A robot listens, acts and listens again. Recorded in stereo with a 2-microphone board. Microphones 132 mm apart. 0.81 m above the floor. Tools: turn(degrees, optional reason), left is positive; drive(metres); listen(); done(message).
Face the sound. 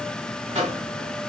turn(degrees=-50, reason="The microwave: about 50° right or 130° right.")
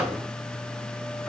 listen()
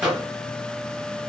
done("Facing the microwave, under 1 m away.")